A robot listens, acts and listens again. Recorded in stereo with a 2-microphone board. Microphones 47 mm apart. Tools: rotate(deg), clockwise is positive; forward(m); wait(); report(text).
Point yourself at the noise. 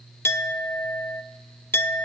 rotate(-55)
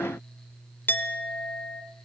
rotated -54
rotate(-55)
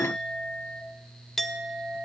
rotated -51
report("Found it: a clink, straight ahead, under 1 m away.")